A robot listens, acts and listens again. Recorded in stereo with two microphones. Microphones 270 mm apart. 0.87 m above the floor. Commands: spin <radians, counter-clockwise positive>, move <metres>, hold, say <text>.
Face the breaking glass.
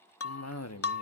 spin 0.96
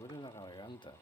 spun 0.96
hold
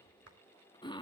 say I heard breaking glass, but can't make it out now. It was about straight ahead or 70° left.